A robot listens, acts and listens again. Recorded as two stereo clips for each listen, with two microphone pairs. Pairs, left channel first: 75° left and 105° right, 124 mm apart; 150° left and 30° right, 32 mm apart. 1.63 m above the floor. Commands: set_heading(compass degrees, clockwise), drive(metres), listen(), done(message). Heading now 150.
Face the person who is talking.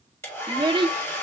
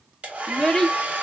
set_heading(300)
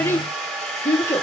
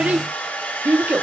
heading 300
done("Facing the child speaking.")